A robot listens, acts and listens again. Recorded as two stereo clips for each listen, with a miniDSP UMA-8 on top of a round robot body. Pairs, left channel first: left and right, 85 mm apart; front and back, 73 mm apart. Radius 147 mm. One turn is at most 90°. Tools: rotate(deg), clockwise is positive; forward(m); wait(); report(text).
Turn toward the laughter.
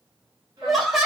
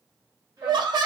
rotate(-90)
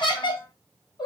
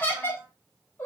rotate(-65)
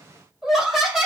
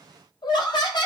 report("Found it: laughter, straight ahead.")